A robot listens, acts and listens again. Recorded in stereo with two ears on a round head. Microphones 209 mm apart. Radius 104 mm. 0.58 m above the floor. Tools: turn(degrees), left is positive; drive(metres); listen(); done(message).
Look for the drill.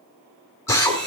turn(degrees=30)
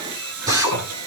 turn(degrees=-15)
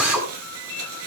done("Found it: a drill, straight ahead, over 4 m away.")